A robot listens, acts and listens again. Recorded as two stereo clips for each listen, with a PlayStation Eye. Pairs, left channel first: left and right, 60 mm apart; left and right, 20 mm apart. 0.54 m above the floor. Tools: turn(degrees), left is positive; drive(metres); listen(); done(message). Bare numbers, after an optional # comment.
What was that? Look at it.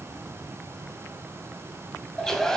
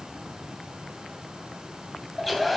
turn(30)
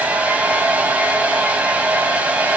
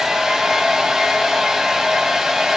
# So it is at 25° right.
turn(-25)
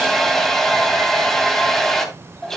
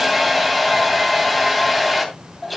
done("Facing the hair dryer, 2 to 4 m away.")